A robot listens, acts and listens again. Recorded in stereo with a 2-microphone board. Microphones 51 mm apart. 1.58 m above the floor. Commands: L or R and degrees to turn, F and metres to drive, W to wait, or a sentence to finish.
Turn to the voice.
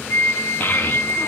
L40
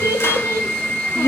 L105
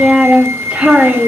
R20
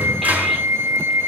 W
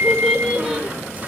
Facing the child speaking.